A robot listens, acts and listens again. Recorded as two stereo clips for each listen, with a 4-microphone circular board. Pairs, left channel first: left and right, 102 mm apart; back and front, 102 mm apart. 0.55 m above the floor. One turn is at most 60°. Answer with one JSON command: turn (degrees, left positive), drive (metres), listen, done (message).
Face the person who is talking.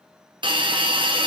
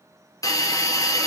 {"listen": true}
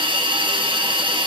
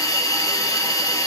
{"listen": true}
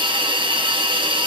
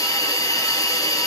{"done": "I can't make out anyone speaking to turn to."}